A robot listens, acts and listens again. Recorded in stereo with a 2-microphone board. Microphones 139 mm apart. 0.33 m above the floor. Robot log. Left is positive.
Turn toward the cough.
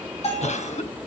note: The cough: about 60° left or 120° left.
cmd yaw +60
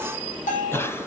note: So it is at 20° left.
cmd yaw +20
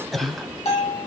end: Facing the cough.